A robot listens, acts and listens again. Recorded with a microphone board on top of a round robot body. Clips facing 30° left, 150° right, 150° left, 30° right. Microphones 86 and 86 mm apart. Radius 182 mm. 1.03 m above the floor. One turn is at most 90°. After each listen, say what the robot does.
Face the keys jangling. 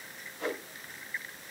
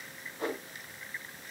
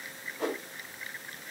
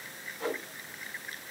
Keep listening.
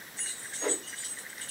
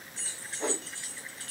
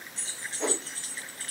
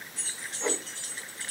Turn 90° right.
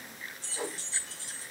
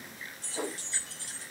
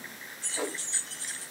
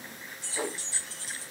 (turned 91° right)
Turn 90° right.
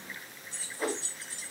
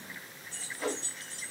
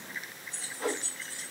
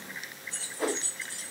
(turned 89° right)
Turn 55° right.
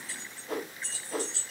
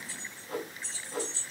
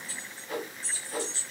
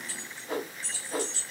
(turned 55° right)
Facing the keys jangling.